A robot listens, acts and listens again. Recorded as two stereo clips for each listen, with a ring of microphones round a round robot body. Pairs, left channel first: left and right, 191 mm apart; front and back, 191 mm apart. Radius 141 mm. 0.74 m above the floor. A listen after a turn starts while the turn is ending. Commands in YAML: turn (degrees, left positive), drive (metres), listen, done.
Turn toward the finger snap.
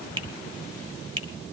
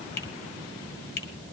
turn: -30
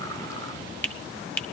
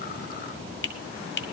turn: 10
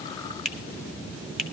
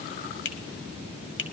done: "Found it: a finger snap, straight ahead."